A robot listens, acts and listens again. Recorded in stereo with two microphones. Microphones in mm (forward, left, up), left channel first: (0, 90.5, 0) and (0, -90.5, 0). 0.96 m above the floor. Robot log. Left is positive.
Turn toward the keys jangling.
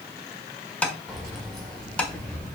cmd yaw +30
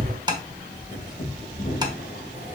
note: So it is at 130° left.
cmd yaw +130
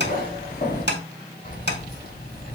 note: The keys jangling is now 50° left.
cmd yaw +50
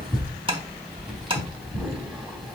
end: Facing the keys jangling.